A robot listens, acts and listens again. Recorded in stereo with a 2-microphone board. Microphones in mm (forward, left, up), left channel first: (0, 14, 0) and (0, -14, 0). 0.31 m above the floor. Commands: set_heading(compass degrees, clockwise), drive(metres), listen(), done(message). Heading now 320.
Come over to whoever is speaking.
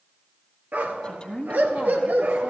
set_heading(285)
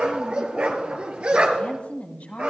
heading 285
set_heading(180)
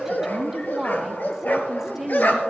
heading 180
set_heading(195)
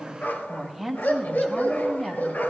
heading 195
drive(1.0)
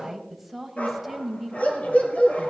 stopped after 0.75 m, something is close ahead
set_heading(205)
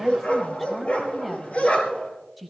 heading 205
done("Arrived at the woman speaking, straight ahead.")